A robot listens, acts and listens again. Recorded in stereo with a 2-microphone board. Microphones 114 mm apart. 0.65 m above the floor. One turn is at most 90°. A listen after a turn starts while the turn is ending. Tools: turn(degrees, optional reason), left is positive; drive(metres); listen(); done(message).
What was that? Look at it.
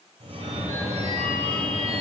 turn(degrees=-60, reason="The phone ringing: about 60° right or 120° right.")
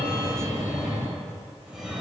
done("Facing the phone ringing.")